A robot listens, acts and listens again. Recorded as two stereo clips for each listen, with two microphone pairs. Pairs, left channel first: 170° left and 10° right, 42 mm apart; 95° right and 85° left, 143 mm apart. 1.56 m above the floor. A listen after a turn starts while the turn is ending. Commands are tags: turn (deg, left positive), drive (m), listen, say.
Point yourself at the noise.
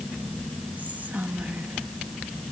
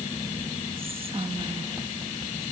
<turn deg="35"/>
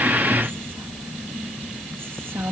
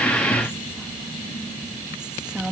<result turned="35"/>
<say>Facing the whispering, 1 to 2 m away.</say>